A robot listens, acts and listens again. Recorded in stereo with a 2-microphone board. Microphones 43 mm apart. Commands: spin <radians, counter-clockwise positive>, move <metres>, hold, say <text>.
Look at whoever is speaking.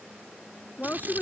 spin 0.79
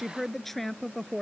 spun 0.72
say Facing the woman speaking.